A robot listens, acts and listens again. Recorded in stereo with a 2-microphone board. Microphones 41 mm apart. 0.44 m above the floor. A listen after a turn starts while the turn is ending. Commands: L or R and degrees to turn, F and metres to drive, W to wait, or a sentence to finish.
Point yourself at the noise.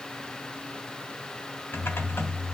L70
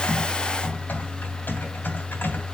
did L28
L60
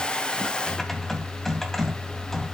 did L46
L10
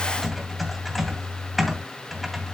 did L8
Found it: typing on a keyboard, straight ahead, 2 to 4 m away.